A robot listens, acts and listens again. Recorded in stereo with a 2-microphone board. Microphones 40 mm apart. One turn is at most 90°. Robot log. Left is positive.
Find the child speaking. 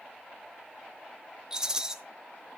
cmd idle
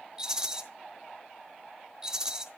cmd idle
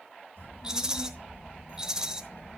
cmd yaw +90
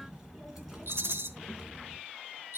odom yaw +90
end: Facing the child speaking.